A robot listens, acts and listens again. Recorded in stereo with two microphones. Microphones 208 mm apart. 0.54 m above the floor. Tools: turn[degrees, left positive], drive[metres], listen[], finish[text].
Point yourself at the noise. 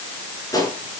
Thought: The gunshot: about 15° left or 165° left.
Action: turn[15]
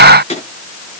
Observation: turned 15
Thought: So it is at 150° left.
Action: turn[150]
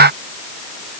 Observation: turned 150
Action: finish[I heard a gunshot from this way, but can't make it out now.]